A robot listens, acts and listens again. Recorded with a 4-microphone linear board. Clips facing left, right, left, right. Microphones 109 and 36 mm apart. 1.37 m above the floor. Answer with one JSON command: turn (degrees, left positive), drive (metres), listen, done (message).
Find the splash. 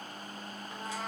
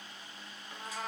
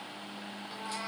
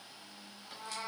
{"listen": true}
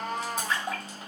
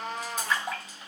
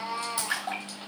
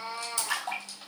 {"turn": 30}
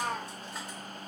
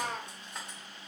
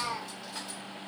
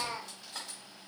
{"listen": true}
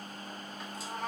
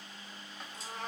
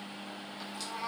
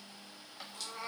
{"done": "I heard a splash, but can't make it out now. It was about 15° right or 135° left."}